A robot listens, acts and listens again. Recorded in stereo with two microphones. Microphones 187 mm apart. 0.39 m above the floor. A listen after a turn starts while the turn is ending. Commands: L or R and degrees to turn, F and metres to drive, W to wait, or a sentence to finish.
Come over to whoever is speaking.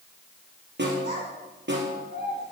R65
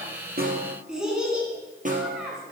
F1.0
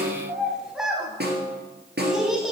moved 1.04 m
F1.0
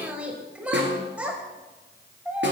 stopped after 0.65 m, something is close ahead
R10
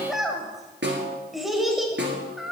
I am next to the child speaking.